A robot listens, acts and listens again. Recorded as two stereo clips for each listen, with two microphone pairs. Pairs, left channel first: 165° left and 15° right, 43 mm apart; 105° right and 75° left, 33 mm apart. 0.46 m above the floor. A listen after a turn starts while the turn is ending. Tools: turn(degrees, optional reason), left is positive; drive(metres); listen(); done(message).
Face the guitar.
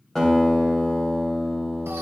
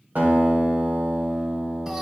turn(degrees=85, reason="The guitar: 85° left.")
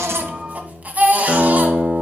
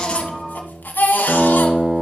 done("Found it: a guitar, straight ahead.")